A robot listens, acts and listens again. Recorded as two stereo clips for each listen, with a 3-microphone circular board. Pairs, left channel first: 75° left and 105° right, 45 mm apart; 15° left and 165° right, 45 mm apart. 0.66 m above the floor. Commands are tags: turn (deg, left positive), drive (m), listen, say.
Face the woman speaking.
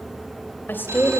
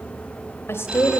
<turn deg="30"/>
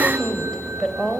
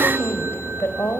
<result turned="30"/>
<say>Facing the woman speaking.</say>